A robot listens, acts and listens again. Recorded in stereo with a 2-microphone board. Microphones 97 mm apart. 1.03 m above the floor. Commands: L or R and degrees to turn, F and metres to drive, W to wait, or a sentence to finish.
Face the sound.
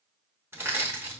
R25
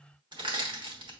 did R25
R130
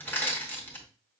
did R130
L20
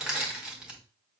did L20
R10
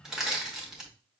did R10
Facing the crushing.